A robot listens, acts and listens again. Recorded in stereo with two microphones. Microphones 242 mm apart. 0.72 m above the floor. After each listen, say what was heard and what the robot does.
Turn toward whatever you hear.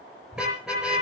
Turn 30° left.
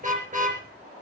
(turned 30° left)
So it is at 30° right. Turn 30° right.
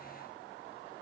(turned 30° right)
Keep listening.
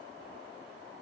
Keep listening.
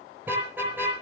Facing the car horn, over 4 m away.